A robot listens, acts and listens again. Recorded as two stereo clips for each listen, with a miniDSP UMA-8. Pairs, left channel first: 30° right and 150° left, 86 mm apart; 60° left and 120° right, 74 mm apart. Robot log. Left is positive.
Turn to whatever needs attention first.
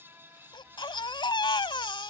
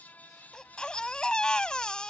note: The baby crying: 20° right.
cmd yaw -20
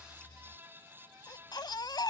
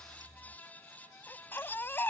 end: Found it: a baby crying, straight ahead.